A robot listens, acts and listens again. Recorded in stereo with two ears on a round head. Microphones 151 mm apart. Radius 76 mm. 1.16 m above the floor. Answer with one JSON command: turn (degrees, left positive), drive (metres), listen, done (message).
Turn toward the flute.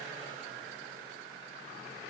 {"listen": true}
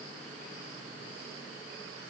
{"listen": true}
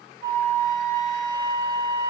{"turn": -20}
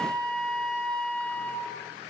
{"done": "Found it: a flute, straight ahead."}